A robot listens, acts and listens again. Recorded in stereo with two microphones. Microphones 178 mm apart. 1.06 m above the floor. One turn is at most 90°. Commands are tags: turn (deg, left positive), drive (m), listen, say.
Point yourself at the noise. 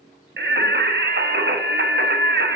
<turn deg="-90"/>
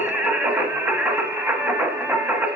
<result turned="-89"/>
<turn deg="-10"/>
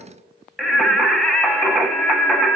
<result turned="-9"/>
<say>Found it: singing, straight ahead, 1 to 2 m away.</say>